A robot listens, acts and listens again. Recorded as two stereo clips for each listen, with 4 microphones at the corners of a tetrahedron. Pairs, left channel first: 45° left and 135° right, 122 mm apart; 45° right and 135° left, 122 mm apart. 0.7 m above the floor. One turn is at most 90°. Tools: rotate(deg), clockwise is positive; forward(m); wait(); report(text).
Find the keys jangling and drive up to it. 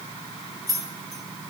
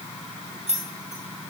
rotate(-90)
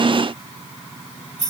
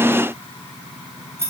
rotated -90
rotate(-70)
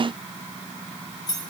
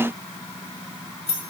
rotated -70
rotate(10)
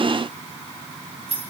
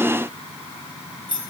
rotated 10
forward(1.0)
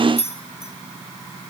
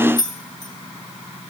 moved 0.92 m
forward(1.0)
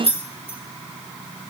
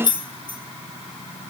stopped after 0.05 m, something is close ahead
report("Arrived at the keys jangling, straight ahead.")